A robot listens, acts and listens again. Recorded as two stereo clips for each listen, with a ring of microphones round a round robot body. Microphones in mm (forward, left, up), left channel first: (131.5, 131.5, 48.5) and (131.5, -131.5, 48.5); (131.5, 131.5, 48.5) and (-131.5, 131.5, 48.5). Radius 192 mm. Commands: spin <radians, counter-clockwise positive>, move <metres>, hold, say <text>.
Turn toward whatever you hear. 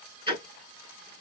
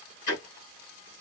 spin -0.35
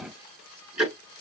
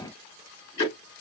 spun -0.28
say Facing the ticking, over 4 m away.